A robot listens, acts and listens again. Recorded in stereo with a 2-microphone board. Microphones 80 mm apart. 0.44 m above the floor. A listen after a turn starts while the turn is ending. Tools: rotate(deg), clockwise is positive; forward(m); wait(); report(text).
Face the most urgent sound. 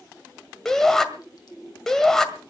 rotate(-30)
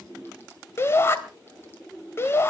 rotate(-145)
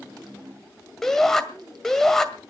report("Facing the shout, 1 to 2 m away.")